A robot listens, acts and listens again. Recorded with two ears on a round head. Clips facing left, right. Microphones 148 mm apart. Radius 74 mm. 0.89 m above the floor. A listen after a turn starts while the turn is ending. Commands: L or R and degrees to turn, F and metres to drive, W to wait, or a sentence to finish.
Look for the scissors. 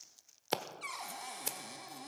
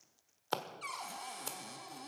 L20
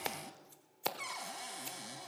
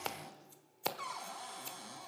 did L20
Found it: scissors, straight ahead.